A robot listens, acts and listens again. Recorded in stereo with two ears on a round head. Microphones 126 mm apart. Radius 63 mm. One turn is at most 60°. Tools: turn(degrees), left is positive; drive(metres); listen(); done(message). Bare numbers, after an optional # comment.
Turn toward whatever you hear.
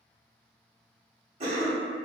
# The cough: about 45° right or 135° right.
turn(-45)
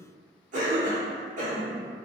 # So it is at 80° right.
turn(-60)
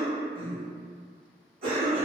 # The cough is now 50° right.
turn(-50)
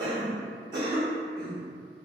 # The cough is now 35° right.
turn(-35)
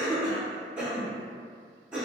# The cough is now 10° right.
turn(-10)
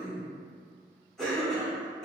done("Found it: a cough, straight ahead.")